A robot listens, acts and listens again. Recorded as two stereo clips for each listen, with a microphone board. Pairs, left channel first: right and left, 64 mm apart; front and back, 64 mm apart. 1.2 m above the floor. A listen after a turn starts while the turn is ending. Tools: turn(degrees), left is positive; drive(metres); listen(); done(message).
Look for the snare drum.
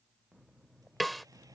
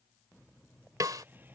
turn(degrees=180)
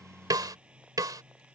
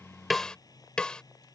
turn(degrees=75)
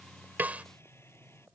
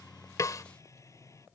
turn(degrees=20)
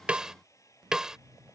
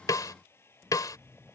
turn(degrees=10)
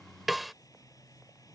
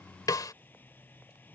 done("Facing the snare drum.")